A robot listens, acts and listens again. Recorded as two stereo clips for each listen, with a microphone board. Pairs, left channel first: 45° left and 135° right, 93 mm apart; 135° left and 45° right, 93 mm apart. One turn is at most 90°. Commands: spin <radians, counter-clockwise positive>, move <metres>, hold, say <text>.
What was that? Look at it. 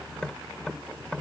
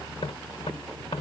spin 1.57
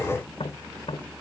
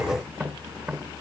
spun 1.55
spin 0.70
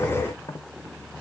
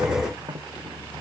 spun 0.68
say Found it: tapping, straight ahead.